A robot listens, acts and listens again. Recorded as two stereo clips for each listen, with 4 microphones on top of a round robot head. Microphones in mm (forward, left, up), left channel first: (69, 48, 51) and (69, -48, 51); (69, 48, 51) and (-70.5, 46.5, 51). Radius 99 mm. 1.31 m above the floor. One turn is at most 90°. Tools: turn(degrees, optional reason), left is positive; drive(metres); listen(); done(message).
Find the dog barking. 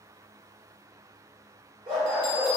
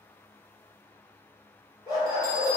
turn(degrees=-60, reason="The dog barking: 60° right.")
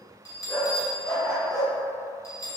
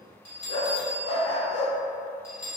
done("Facing the dog barking.")